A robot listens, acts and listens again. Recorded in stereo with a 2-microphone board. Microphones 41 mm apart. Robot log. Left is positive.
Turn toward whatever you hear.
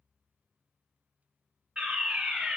note: The fire alarm: about 30° right or 150° right.
cmd yaw -30
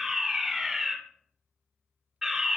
end: Found it: a fire alarm, straight ahead.